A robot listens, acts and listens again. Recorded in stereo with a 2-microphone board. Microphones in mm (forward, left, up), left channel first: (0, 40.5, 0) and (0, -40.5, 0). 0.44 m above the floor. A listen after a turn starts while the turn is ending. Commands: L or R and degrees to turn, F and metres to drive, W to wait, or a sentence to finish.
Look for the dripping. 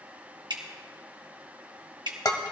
R70
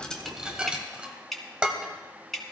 Facing the dripping, 1 to 2 m away.